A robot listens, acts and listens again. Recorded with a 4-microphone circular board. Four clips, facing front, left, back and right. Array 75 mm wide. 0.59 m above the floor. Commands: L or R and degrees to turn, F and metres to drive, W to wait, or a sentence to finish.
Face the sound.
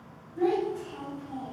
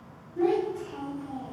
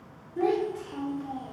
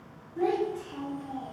R165
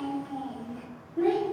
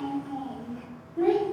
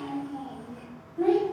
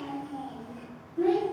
L35
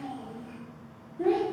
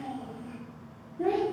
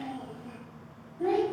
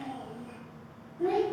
L30
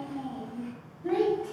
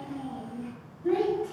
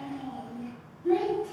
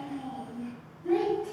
L10
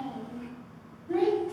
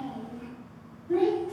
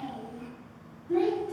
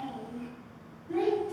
Facing the child speaking, 1 to 2 m away.